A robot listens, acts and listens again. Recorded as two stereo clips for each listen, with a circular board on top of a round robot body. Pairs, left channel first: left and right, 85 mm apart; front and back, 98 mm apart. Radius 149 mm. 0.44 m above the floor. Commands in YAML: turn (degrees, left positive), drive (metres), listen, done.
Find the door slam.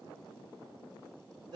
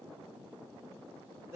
listen: true
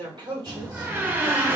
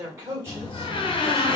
turn: -25
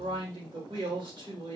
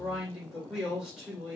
done: "I heard a door slam from this way, but can't make it out now."